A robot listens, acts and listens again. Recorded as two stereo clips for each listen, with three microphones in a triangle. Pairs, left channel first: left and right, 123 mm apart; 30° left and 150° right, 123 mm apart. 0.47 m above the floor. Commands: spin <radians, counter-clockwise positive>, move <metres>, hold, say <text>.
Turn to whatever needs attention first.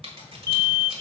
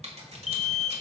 spin 0.44
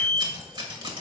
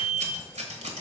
spin 0.17
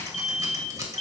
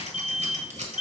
say Found it: an alarm, straight ahead, 1 to 2 m away.